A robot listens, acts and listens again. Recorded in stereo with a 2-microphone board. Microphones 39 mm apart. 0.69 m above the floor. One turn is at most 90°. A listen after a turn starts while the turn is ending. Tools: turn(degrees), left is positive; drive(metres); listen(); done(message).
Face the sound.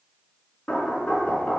turn(degrees=20)
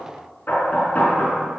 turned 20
turn(degrees=90)
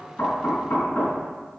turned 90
turn(degrees=90)
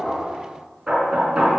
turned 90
turn(degrees=-15)
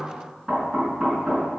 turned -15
done("Facing the knocking.")